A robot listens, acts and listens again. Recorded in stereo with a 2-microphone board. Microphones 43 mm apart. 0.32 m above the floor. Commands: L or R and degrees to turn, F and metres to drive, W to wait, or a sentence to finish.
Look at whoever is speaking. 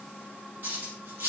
W
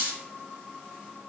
W
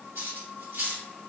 I can't make out anyone speaking to turn to.